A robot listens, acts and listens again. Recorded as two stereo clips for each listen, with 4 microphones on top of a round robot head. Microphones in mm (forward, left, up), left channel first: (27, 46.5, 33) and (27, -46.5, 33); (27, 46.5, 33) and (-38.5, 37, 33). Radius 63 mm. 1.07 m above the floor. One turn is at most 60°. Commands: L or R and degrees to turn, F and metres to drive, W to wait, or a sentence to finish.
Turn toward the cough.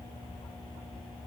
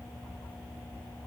W
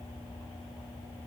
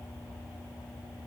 W
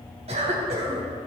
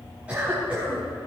R60
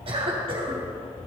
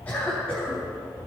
R60
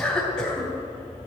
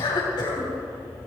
L10
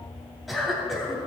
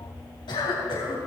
Facing the cough, 2 to 4 m away.